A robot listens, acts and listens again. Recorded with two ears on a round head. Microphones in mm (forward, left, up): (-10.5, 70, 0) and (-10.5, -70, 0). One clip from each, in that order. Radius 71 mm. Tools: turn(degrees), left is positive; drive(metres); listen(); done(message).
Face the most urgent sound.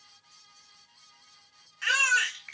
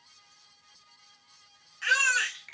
turn(degrees=30)
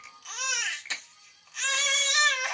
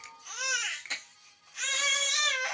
turn(degrees=135)
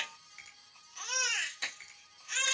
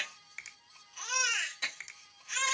turn(degrees=20)
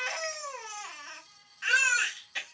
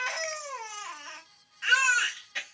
turn(degrees=10)
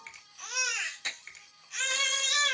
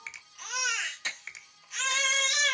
done("Facing the baby crying.")